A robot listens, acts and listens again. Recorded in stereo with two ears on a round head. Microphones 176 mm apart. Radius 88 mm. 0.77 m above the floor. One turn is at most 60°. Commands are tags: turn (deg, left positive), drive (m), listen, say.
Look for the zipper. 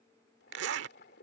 <turn deg="-60"/>
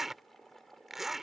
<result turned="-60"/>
<say>Facing the zipper.</say>